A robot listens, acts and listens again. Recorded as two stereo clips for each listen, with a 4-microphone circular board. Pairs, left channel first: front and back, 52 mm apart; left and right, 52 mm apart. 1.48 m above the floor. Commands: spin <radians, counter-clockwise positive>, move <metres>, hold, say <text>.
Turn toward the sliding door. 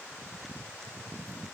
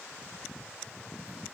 hold
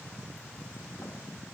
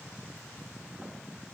hold
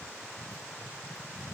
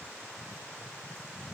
say I can't make out a sliding door.